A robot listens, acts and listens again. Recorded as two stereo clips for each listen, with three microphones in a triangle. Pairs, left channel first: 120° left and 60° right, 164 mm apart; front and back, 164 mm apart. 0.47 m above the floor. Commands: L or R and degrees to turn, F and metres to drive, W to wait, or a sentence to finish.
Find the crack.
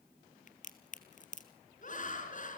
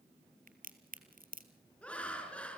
L155
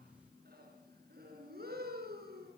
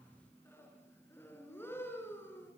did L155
Facing where the crack came from. I can't hear it now.